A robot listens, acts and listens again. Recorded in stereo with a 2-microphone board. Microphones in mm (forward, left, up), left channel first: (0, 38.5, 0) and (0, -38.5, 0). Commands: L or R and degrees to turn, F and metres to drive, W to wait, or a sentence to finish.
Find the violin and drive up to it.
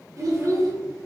W
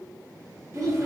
W
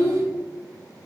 I can't make out a violin, only a child speaking.